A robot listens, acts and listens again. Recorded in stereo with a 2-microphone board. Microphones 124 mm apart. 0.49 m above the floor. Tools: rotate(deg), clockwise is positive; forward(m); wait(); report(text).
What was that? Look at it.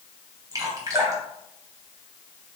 rotate(30)
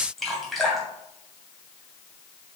report("Found it: dripping, straight ahead.")